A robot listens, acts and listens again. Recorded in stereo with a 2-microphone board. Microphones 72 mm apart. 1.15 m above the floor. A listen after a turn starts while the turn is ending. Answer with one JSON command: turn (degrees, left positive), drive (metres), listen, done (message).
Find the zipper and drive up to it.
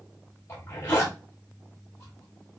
{"turn": 40}
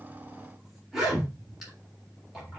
{"drive": 1.0}
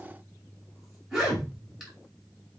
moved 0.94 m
{"drive": 1.0}
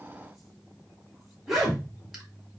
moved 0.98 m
{"drive": 1.0}
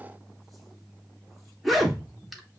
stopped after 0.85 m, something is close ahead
{"done": "I am next to the zipper."}